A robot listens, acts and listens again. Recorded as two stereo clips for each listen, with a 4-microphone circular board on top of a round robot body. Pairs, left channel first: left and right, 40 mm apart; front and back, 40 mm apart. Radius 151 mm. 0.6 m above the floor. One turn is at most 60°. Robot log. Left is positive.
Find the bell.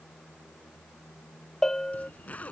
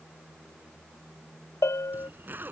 note: The bell: 10° left.
cmd yaw +10
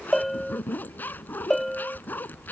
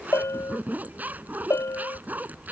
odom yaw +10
end: Facing the bell.